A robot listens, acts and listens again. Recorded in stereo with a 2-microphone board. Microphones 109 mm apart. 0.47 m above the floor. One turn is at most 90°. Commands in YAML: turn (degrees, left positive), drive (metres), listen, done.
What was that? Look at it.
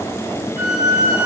turn: 90
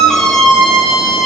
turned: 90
done: "Facing the squeak, 1 to 2 m away."